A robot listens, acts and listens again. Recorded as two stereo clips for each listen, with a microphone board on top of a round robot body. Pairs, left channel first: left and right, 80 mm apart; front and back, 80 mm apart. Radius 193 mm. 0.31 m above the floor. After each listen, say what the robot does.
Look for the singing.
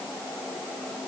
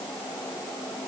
Keep listening.
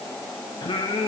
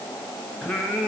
Turn 85° left.
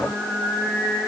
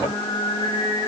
Facing the singing.